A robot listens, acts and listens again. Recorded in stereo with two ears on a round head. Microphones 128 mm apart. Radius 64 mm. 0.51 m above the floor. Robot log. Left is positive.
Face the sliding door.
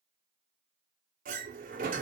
note: The sliding door: about 65° right or 115° right.
cmd yaw -65
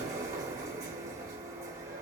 note: So it is at 25° right.
cmd yaw -25
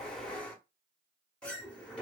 note: The sliding door is now 10° left.
cmd yaw +10
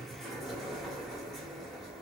end: Found it: a sliding door, straight ahead.